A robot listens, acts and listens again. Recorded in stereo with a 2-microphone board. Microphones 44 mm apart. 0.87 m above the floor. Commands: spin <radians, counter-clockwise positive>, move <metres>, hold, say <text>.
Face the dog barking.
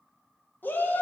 hold
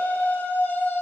hold
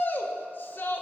say I can't make out a dog barking, only a shout.